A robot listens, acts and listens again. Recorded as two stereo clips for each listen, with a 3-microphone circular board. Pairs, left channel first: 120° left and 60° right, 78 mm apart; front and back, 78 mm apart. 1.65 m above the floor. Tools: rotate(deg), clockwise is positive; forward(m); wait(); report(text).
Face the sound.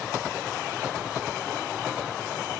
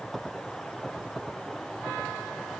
wait()
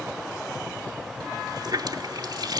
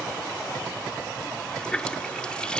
rotate(80)
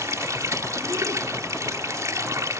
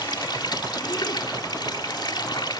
rotate(15)
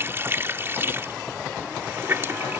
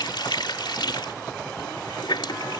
report("Found it: a running tap, straight ahead.")